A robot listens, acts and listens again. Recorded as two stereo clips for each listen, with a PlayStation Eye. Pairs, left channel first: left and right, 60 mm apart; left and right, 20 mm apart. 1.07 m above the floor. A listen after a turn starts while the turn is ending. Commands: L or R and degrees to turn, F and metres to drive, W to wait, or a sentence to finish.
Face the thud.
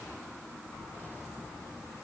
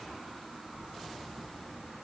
W
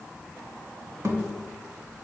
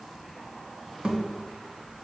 R50
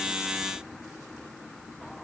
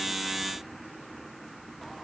W
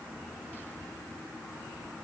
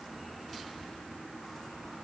I heard a thud, but can't make it out now. It was about straight ahead or 80° right.